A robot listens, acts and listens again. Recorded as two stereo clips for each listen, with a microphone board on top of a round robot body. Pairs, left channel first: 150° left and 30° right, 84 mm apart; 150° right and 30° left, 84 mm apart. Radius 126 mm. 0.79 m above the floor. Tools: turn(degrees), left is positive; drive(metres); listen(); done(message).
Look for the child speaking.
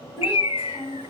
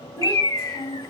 turn(degrees=-95)
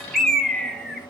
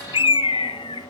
listen()
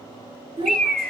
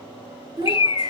turn(degrees=-10)
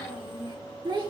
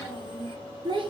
done("Facing the child speaking.")